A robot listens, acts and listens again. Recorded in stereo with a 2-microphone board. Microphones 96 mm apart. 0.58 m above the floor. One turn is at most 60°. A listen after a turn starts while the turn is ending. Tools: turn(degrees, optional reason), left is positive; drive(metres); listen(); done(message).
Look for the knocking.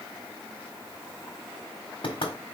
turn(degrees=60, reason="The knocking: about 60° left or 120° left.")
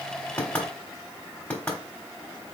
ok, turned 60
turn(degrees=20, reason="So it is at 20° left.")
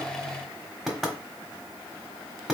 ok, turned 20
done("Found it: knocking, straight ahead.")